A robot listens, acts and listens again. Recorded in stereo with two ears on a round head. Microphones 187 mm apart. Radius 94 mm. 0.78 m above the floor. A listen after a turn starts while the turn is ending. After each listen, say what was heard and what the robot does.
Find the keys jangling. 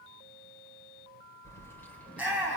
Turn 30° left.
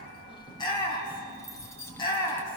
Turn 30° left.
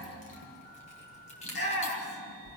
So it is at 150° left. Turn 150° left.
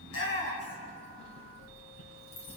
The keys jangling is now 30° left. Turn 30° left.
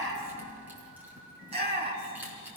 The keys jangling is now 10° right. Turn 10° right.
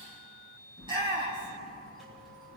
Facing the keys jangling, 2 to 4 m away.